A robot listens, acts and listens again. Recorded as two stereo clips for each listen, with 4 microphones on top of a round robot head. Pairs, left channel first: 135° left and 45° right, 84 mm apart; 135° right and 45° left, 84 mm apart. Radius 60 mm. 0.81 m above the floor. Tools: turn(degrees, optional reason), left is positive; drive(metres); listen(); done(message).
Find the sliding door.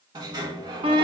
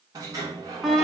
done("Found it: a sliding door, straight ahead.")